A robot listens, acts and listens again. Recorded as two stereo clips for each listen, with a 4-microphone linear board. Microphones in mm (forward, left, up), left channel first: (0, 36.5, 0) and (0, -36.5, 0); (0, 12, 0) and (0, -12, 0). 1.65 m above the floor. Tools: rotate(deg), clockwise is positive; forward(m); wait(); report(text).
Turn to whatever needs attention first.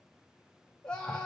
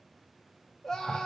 rotate(-30)
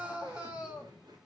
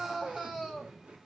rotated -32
rotate(15)
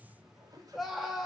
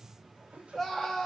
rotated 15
report("Facing the scream.")